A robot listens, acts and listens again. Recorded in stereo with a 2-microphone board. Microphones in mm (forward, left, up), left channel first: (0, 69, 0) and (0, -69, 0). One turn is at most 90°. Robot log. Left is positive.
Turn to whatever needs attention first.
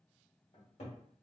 cmd idle
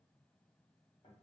cmd idle
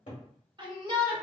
note: The shout: about 35° right or 145° right.
cmd yaw -35
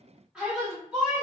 end: Facing the shout.